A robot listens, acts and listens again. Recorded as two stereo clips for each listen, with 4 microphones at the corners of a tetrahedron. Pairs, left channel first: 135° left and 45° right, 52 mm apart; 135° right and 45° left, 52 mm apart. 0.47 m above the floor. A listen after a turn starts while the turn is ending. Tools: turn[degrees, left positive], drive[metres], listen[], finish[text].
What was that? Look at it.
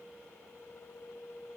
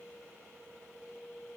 Action: listen[]
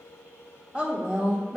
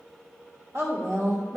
Thought: The woman speaking: 30° left.
Action: turn[30]
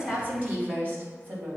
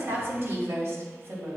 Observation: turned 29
Thought: The woman speaking is now 10° left.
Action: turn[10]
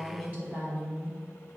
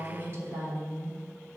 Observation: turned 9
Thought: The woman speaking is now 10° left.
Action: turn[10]
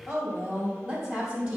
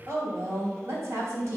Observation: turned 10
Thought: The woman speaking is now 10° left.
Action: turn[10]
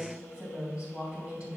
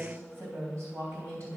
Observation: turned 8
Action: finish[Found it: a woman speaking, straight ahead.]